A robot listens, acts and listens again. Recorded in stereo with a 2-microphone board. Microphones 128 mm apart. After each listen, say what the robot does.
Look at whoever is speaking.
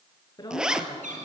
Turn 35° left.
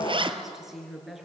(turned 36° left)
Found it: a woman speaking, straight ahead.